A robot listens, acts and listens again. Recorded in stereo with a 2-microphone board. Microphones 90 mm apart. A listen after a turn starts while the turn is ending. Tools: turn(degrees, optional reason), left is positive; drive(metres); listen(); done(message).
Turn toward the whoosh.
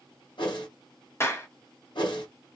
turn(degrees=60, reason="The whoosh: about 60° left or 120° left.")
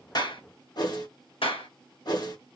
turn(degrees=50, reason="So it is at 50° left.")
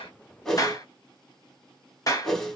done("Facing the whoosh.")